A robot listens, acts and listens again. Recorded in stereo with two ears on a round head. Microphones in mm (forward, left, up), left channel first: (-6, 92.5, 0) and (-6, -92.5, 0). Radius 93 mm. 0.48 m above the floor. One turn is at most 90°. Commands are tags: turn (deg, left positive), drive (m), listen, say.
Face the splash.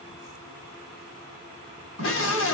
<listen/>
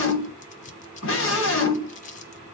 <listen/>
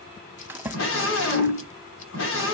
<turn deg="-30"/>
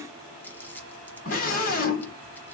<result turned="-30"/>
<listen/>
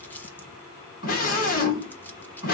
<say>I heard a splash, but can't make it out now. It was about 20° left or 140° right.</say>